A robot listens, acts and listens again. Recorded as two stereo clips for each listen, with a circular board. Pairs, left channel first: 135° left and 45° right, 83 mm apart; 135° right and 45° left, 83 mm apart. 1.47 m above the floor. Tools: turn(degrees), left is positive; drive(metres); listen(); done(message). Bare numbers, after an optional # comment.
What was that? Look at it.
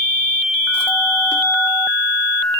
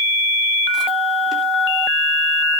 listen()
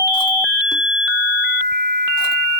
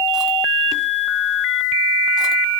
listen()
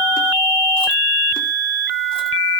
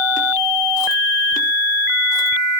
done("I can't make out anything.")